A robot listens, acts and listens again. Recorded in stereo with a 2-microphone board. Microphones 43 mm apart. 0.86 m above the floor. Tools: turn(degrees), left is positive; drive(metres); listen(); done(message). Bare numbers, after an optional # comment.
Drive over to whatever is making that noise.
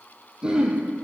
# The throat clearing: about 20° right or 160° right.
turn(-20)
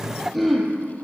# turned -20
drive(1.0)
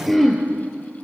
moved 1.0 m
drive(1.0)
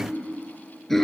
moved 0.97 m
drive(1.0)
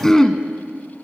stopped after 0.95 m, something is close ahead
# The throat clearing is now 15° left.
turn(15)
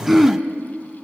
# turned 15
done("Arrived at the throat clearing, straight ahead.")